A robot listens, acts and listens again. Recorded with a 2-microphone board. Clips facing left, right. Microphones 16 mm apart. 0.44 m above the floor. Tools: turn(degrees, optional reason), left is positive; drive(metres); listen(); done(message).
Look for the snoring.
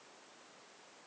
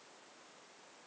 listen()
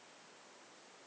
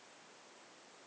listen()
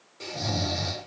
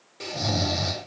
turn(degrees=-20, reason="The snoring: about 20° right or 160° right.")
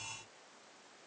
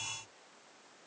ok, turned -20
listen()
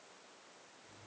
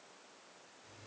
listen()
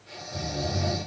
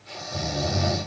turn(degrees=-140, reason="So it is at 140° right.")
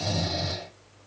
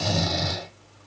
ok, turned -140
turn(degrees=-50, reason="The snoring is now 50° right.")
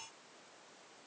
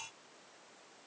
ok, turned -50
listen()
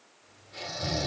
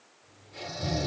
turn(degrees=20, reason="The snoring is now 20° left.")
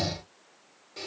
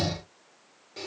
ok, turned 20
done("Facing the snoring.")